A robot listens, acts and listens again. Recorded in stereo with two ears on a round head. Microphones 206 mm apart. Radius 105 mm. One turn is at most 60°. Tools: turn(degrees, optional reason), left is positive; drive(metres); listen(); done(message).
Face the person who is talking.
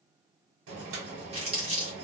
listen()
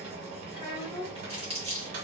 turn(degrees=25, reason="The child speaking: about 25° left or 155° left.")
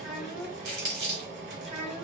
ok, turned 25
done("Found it: a child speaking, straight ahead.")